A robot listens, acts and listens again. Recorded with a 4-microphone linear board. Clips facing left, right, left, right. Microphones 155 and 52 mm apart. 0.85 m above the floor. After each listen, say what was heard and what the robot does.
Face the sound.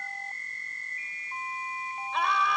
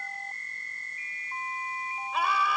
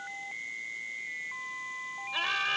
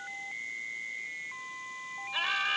Turn 30° right.
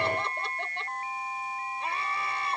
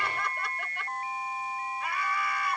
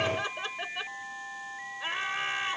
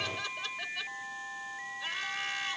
So it is at 25° left. Turn 25° left.
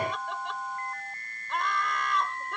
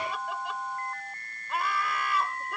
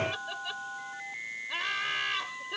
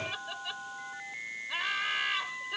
Facing the laughter.